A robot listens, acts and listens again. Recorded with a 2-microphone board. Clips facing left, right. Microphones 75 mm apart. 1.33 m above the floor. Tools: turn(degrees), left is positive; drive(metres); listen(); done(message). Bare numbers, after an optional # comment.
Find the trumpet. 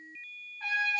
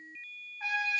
turn(-30)
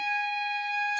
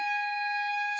# So it is at 135° right.
turn(-135)
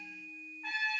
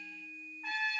done("Facing the trumpet.")